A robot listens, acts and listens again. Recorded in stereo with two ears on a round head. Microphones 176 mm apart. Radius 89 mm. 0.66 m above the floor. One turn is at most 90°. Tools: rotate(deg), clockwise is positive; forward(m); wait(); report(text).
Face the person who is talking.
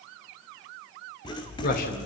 rotate(-50)
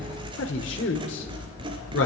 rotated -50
rotate(-75)
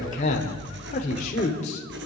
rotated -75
rotate(-40)
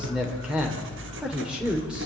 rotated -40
report("Facing the man speaking.")